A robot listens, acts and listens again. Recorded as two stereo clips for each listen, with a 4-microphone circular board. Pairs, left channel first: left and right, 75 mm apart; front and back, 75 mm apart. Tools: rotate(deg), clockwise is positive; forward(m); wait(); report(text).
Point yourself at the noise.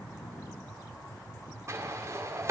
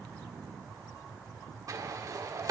rotate(140)
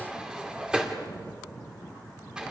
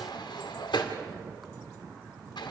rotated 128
rotate(10)
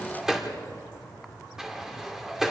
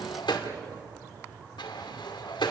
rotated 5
report("Found it: a sliding door, straight ahead.")